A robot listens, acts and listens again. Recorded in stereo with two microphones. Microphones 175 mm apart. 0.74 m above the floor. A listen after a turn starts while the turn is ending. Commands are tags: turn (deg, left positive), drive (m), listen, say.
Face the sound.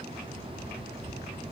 <listen/>
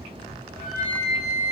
<turn deg="-30"/>
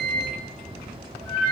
<turn deg="25"/>
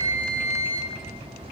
<say>Facing the flute, under 1 m away.</say>